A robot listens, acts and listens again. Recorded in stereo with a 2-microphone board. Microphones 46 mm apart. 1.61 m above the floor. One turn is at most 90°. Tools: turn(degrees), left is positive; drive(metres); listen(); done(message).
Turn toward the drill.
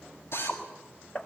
turn(degrees=70)
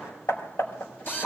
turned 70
turn(degrees=45)
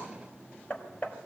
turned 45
listen()
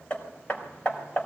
listen()
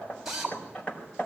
turn(degrees=-10)
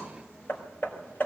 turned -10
listen()
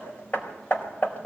listen()
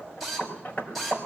done("Found it: a drill, straight ahead.")